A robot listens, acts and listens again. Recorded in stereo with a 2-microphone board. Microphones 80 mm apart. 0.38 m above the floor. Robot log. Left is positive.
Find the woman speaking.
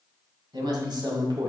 note: The woman speaking: about 65° right or 115° right.
cmd yaw -65
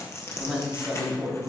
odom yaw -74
note: So it is at 10° right.
cmd yaw -10
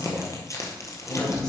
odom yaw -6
end: Found it: a woman speaking, straight ahead.